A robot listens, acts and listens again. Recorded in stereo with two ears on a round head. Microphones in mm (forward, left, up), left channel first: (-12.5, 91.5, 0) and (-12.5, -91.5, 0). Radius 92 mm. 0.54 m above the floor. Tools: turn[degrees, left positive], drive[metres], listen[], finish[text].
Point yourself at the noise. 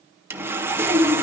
Action: turn[-30]
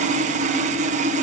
Thought: So it is at 140° right.
Action: turn[-140]
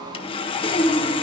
Thought: The sawing is now 30° left.
Action: turn[30]
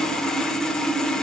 Action: finish[Facing the sawing, 1 to 2 m away.]